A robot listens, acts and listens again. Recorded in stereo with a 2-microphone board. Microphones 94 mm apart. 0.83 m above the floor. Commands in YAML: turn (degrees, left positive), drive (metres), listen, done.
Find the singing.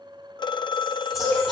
turn: 30
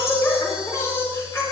turn: 150
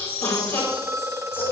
turn: 20
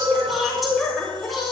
done: "Facing the singing."